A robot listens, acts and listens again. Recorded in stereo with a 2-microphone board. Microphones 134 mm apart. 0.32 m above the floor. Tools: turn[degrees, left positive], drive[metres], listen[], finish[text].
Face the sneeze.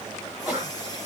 Action: turn[-30]
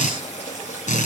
Action: listen[]
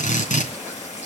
Action: finish[I heard a sneeze, but can't make it out now. It was about 25° left or 145° right.]